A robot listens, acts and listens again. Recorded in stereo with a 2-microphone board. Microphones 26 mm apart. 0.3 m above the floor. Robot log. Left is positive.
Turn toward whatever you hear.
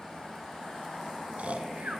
note: The snoring: about 65° right or 115° right.
cmd yaw -65
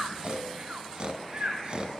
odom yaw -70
note: So it is at 40° right.
cmd yaw -40
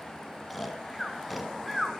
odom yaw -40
end: Found it: snoring, straight ahead.